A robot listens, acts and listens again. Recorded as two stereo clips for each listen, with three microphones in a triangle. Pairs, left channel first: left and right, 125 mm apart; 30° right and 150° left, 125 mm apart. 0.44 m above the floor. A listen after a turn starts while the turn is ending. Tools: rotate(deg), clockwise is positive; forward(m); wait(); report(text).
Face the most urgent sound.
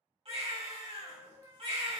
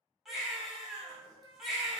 rotate(120)
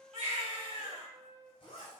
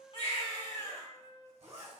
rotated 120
rotate(50)
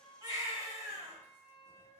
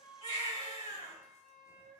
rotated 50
rotate(25)
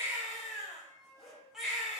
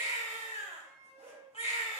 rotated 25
report("Facing the baby crying.")